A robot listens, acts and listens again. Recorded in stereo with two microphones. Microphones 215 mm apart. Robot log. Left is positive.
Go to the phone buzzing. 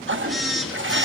cmd yaw +30
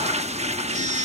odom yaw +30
note: So it is at 35° right.
cmd yaw -35
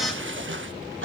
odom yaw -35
cmd idle
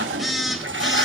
cmd fwd 1.0
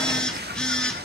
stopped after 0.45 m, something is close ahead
end: Blocked. The phone buzzing is further on, straight ahead.